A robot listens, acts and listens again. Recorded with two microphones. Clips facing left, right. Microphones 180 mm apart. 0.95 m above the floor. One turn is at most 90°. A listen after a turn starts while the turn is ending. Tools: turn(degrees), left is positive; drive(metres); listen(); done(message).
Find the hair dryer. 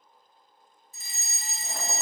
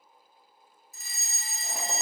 listen()
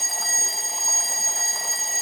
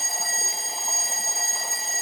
listen()
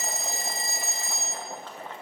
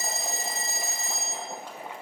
done("I can't make out a hair dryer, only a fire alarm and boiling.")